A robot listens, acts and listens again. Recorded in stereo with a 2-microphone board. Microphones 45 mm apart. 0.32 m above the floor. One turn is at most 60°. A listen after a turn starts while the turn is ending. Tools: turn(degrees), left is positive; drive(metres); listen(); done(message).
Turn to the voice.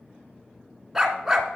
listen()
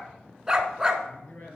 turn(degrees=50)
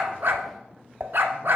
listen()
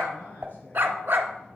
turn(degrees=60)
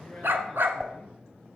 turn(degrees=10)
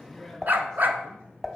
done("Facing the man speaking, 2 to 4 m away.")